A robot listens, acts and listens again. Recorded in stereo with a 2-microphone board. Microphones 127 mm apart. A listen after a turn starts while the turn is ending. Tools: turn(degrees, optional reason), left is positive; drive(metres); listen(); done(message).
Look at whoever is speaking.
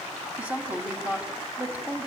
turn(degrees=-30)
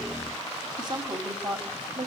turn(degrees=-135, reason="So it is at 135° right.")
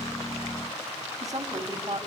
turn(degrees=-35, reason="The woman speaking is now 35° right.")
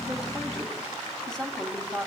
done("Facing the woman speaking.")